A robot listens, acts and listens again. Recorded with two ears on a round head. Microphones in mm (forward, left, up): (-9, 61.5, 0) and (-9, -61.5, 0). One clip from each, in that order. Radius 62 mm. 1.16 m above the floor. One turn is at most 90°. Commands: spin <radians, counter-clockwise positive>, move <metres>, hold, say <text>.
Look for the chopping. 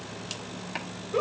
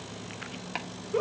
spin -0.35
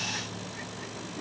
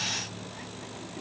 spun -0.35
hold
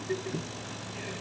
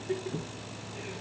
spin -1.57
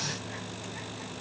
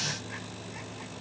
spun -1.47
spin -0.96
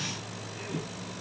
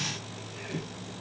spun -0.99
say Facing the chopping, 1 to 2 m away.